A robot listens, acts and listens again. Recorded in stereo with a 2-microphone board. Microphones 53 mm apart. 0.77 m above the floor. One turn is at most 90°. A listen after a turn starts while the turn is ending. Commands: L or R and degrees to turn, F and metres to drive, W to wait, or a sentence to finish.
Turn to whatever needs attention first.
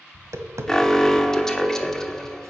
L30
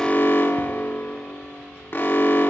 L90
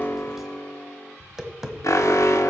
L90
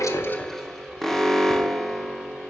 L10
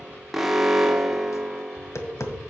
Found it: an alarm, straight ahead, 1 to 2 m away.